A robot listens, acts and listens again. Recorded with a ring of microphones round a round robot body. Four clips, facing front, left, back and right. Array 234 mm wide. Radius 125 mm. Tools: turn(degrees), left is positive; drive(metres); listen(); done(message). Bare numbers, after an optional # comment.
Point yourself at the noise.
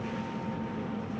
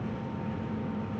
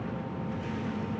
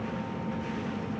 listen()
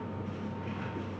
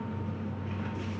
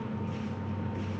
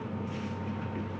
listen()
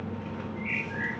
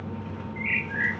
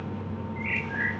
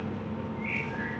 # The bird: 110° left.
turn(110)
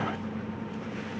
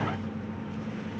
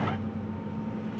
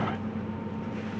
listen()
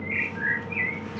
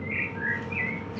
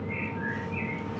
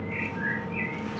# The bird is now 10° left.
turn(10)
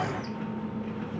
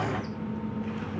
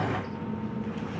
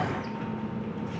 listen()
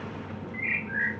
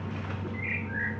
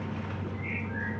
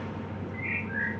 done("Found it: a bird, straight ahead.")